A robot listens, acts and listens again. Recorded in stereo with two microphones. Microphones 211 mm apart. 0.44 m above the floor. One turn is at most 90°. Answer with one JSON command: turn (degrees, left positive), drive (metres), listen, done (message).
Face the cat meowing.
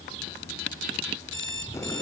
{"listen": true}
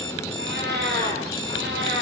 {"turn": -60}
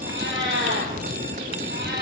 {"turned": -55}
{"turn": -55}
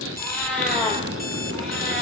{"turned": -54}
{"done": "Found it: a cat meowing, straight ahead."}